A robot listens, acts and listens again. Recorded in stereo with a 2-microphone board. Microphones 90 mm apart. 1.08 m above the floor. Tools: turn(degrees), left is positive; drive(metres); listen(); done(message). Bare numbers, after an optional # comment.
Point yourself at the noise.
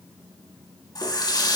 # The running tap: about 50° left or 130° left.
turn(50)
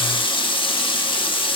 # So it is at 80° left.
turn(80)
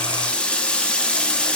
# The running tap is now 15° left.
turn(15)
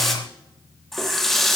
done("Facing the running tap.")